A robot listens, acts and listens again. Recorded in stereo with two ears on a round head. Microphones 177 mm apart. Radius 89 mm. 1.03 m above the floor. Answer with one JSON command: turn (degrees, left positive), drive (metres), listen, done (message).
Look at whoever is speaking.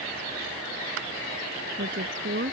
{"turn": -45}
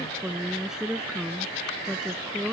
{"done": "Facing the woman speaking."}